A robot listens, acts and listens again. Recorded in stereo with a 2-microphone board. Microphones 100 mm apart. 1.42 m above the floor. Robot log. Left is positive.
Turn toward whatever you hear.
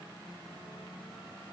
cmd idle
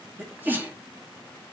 note: The sneeze: about 20° right or 160° right.
cmd yaw -20
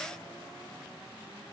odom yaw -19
cmd idle
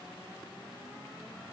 end: I heard a sneeze, but can't make it out now. It was about straight ahead or 140° right.